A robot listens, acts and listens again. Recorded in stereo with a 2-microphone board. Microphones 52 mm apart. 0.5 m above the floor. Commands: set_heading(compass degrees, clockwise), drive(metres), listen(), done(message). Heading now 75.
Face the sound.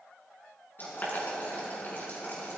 set_heading(35)
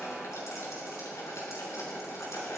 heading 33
set_heading(293)
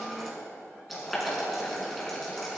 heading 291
done("Facing the boiling.")